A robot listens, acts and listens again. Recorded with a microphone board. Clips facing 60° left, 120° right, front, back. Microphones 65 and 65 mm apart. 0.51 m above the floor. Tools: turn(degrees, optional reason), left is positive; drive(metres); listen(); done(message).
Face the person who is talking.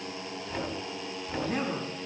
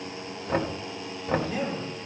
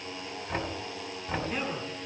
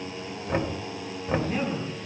turn(degrees=90, reason="The man speaking: 90° left.")
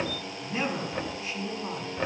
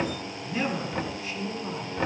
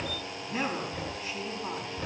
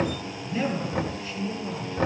done("Found it: a man speaking, straight ahead.")